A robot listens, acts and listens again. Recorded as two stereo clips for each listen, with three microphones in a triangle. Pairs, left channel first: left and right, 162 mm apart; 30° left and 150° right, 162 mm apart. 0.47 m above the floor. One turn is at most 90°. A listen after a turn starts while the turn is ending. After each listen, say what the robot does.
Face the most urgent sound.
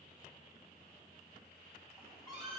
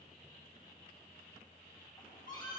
Keep listening.
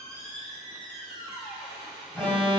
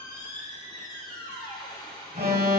Turn 90° right.
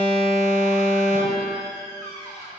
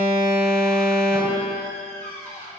Turn 60° right.
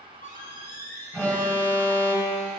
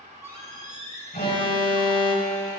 Turn 10° left.
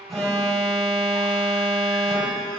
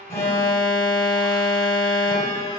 Found it: an alarm, straight ahead.